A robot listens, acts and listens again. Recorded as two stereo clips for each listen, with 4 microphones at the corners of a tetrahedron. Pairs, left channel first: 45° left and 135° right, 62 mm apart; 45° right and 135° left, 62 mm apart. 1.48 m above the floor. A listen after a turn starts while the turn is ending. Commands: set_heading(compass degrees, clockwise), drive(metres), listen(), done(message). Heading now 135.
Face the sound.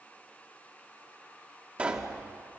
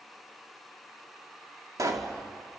set_heading(340)
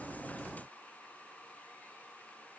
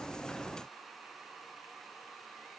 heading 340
done("I heard a pop from this way, but can't make it out now.")